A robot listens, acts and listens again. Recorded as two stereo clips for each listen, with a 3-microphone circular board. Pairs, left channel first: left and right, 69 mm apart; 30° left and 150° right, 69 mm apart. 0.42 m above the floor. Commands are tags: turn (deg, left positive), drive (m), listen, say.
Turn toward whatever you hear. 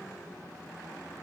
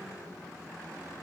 <listen/>
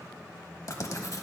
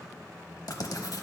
<turn deg="55"/>
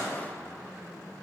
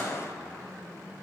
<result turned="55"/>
<listen/>
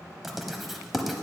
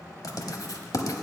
<say>Facing the writing.</say>